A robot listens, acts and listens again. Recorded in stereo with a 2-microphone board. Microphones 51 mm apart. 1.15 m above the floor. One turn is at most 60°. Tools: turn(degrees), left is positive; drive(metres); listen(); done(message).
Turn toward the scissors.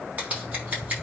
turn(degrees=-35)
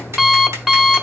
listen()
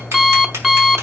listen()
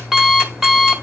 done("I heard scissors, but can't make it out now. It was about straight ahead or 110° right.")